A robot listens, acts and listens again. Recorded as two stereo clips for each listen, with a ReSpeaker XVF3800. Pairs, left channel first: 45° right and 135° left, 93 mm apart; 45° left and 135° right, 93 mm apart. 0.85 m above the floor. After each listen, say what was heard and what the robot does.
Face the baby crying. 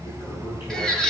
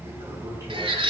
The baby crying: 130° right. Turn 130° right.
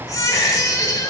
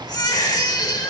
Found it: a baby crying, straight ahead.